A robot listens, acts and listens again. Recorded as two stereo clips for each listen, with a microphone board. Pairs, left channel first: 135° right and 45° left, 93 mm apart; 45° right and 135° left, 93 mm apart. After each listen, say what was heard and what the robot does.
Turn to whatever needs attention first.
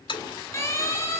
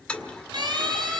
The siren: 170° left. Turn 170° left.
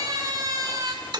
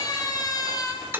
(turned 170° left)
Facing the siren, over 4 m away.